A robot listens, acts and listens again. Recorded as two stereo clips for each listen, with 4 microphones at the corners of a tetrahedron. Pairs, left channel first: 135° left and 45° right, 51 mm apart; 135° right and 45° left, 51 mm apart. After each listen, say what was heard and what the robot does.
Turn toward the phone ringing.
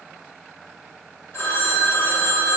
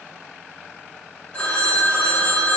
The phone ringing: 160° left. Turn 160° left.
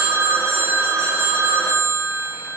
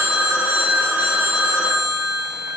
The phone ringing is now 20° right. Turn 20° right.
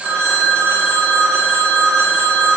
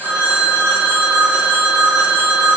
Found it: a phone ringing, straight ahead.